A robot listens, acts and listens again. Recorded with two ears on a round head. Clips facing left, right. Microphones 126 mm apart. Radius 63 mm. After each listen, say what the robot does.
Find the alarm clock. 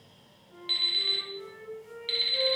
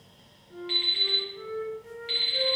Turn 40° left.
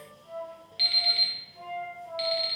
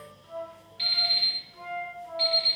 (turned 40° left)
Turn 100° left.
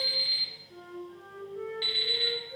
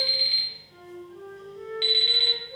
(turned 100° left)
Turn 25° right.
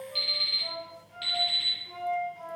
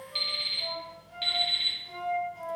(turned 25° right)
Facing the alarm clock, under 1 m away.